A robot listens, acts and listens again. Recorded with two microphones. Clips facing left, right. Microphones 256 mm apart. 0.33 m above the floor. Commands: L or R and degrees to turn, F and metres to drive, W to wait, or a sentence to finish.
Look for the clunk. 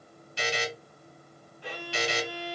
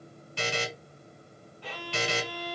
W
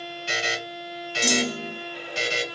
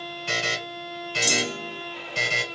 L60
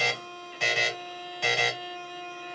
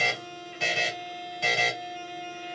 W
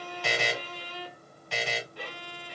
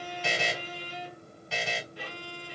I heard a clunk, but can't make it out now. It was about straight ahead or 60° left.